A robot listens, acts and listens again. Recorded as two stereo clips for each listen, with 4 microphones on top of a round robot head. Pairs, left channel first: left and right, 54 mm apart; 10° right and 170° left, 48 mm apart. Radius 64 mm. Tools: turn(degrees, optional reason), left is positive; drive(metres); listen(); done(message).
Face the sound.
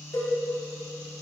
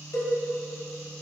turn(degrees=30, reason="The cowbell: 30° left.")
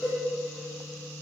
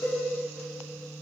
turn(degrees=10, reason="The cowbell is now 10° left.")
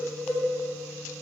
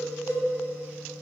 done("Facing the cowbell.")